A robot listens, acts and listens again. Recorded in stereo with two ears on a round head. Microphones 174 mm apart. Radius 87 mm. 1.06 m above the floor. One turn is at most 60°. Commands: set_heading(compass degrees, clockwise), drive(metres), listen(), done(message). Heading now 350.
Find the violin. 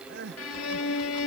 set_heading(290)
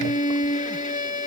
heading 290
set_heading(250)
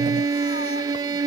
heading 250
set_heading(270)
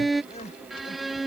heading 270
done("Facing the violin.")